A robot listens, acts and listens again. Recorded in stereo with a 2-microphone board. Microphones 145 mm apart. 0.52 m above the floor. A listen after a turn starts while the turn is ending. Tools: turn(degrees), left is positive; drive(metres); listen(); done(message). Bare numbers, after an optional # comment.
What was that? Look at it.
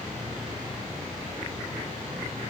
listen()
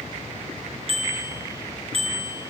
# The bicycle bell: about 45° right or 135° right.
turn(-45)
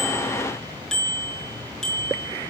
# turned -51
done("Found it: a bicycle bell, straight ahead, over 4 m away.")